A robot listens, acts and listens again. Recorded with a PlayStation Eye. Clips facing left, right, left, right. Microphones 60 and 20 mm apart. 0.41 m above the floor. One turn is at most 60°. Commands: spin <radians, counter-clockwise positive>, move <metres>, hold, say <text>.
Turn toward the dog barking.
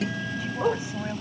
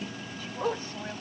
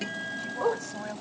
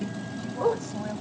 spin 0.52
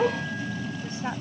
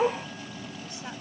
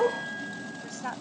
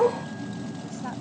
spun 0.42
spin -0.17
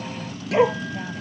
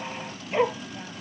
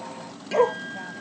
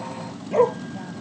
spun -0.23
spin 0.26
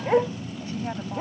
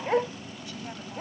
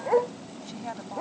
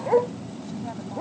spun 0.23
spin 0.17
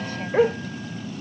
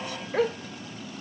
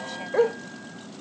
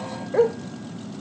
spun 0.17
spin 0.26
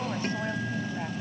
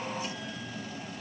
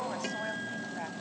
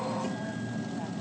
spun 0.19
hold
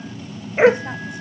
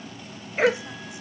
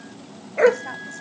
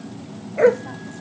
spin 0.44
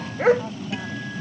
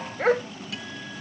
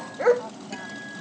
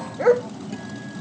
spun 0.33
say Facing the dog barking.